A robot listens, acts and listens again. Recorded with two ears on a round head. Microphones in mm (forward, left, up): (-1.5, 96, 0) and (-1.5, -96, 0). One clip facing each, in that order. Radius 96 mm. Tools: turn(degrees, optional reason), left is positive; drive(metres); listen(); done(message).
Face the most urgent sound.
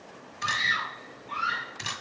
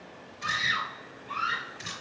turn(degrees=-15, reason="The scream: about 15° right or 165° right.")
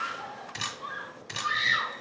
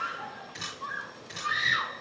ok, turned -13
done("Found it: a scream, straight ahead.")